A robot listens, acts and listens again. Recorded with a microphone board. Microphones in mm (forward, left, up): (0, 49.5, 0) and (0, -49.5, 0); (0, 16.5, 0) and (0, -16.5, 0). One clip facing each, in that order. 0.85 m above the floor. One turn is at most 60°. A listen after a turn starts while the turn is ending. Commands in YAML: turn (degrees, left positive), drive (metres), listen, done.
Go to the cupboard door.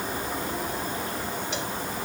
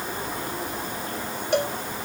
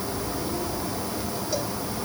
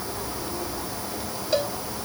listen: true
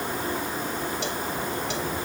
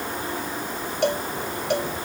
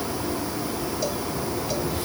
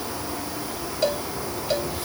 listen: true
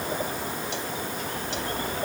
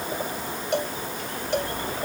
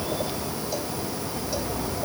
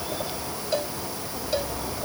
done: "I can't make out a cupboard door."